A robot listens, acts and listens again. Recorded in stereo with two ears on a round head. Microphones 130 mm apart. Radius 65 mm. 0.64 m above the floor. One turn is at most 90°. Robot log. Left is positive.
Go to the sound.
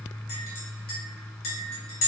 note: The clink: about 65° left or 115° left.
cmd yaw +65
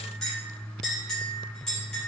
cmd fwd 1.0
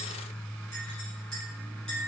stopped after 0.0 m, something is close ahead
end: Something is in my way. I am facing the clink but have not reached it.